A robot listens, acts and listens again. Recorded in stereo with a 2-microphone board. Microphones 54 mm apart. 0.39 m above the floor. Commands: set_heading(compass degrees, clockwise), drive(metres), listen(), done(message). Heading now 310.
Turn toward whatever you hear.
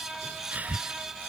set_heading(340)
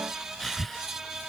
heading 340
done("Facing the breathing.")